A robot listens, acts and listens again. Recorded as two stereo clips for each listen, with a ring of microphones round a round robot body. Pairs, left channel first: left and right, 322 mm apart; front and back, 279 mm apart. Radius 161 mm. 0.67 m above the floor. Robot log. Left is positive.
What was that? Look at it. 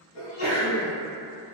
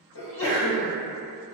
note: The sneeze: 40° left.
cmd yaw +40
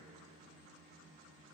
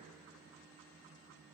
end: Facing where the sneeze came from. I can't hear it now.